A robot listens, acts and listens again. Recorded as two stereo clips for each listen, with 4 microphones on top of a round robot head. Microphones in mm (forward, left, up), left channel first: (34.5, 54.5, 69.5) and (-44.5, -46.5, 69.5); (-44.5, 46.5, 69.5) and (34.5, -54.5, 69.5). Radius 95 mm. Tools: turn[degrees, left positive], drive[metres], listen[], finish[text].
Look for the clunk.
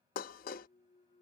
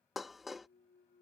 Thought: The clunk: 95° left.
Action: turn[95]
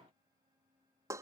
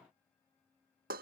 Action: finish[I heard a clunk from this way, but can't make it out now.]